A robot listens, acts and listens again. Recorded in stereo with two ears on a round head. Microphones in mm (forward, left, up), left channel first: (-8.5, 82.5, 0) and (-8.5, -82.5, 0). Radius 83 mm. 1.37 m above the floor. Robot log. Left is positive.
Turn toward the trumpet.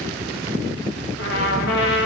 note: The trumpet: about 65° left or 115° left.
cmd yaw +65
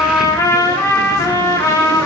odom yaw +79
note: So it is at 20° left.
cmd yaw +20
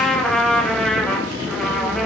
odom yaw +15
end: Facing the trumpet.